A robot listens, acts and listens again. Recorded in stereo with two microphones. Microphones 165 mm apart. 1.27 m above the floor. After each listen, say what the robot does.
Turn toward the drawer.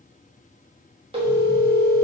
Keep listening.
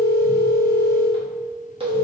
Keep listening.
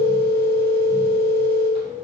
I can't make out a drawer, only a phone ringing.